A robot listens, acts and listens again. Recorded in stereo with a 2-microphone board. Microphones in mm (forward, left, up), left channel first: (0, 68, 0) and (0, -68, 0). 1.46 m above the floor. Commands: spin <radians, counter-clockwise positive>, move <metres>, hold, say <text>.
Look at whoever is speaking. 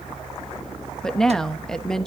spin 0.52
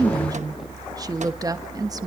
spin -0.52
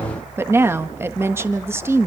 spin -0.35
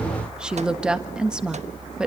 say Found it: a woman speaking, straight ahead, 1 to 2 m away.